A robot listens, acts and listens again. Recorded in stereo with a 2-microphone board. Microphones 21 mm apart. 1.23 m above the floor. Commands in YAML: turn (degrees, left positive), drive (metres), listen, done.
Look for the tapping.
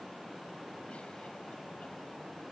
listen: true
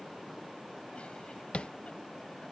turn: 65
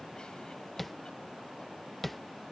done: "Facing the tapping."